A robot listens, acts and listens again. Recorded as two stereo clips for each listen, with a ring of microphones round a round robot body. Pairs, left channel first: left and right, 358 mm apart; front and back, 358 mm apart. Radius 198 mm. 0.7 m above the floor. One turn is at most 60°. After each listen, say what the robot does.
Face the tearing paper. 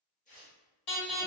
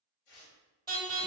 Turn 20° left.
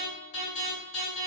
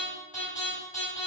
Keep listening.
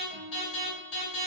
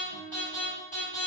Keep listening.
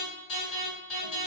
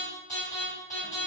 I heard tearing paper from this way, but can't make it out now.